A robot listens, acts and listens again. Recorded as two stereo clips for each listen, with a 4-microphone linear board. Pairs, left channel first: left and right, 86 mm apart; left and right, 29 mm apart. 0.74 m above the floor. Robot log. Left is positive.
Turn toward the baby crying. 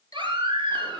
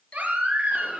note: The baby crying: about 75° right or 105° right.
cmd yaw -75
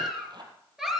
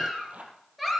end: Found it: a baby crying, straight ahead.